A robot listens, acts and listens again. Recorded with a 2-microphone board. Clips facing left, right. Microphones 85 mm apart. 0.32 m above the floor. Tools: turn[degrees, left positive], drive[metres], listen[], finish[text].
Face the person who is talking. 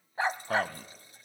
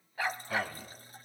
Thought: The man speaking: about 55° left or 125° left.
Action: turn[55]
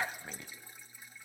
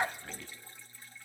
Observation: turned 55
Thought: So it is at 30° left.
Action: turn[30]
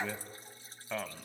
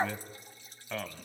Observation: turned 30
Thought: The man speaking is now 10° left.
Action: turn[10]
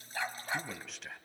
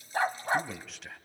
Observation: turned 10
Action: finish[Found it: a man speaking, straight ahead, 1 to 2 m away.]